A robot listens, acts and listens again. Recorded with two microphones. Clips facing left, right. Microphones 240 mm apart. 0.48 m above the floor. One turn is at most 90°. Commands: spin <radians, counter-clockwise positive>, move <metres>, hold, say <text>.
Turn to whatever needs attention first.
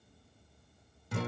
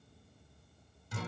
hold
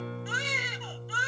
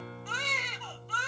spin 0.52
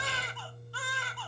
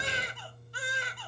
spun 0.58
spin -0.35
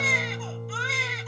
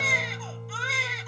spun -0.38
say Facing the baby crying.